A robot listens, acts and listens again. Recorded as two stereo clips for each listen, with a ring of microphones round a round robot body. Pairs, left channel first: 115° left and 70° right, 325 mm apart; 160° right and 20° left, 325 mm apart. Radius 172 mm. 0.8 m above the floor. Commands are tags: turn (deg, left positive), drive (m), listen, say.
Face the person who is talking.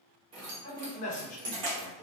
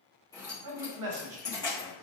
<turn deg="45"/>
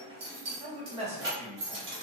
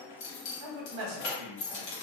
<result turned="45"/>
<say>Found it: a man speaking, straight ahead, under 1 m away.</say>